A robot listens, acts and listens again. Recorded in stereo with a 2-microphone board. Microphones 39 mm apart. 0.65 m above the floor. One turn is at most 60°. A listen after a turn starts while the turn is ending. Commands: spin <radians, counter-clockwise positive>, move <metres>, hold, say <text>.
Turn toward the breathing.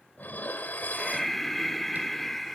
spin 0.52
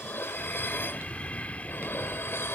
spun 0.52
spin 1.05
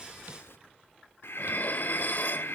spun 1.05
spin 1.05
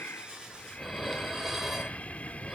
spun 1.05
spin 0.61
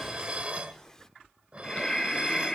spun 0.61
spin 0.26
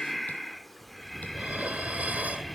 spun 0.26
say Facing the breathing, under 1 m away.